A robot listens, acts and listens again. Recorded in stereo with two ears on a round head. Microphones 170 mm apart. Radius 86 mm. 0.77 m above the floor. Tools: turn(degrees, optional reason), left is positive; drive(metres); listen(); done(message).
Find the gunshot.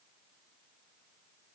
listen()
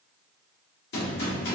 turn(degrees=60, reason="The gunshot: about 60° left or 120° left.")
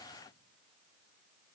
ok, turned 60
listen()
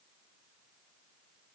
done("I heard a gunshot, but can't make it out now. It was about straight ahead or 60° left.")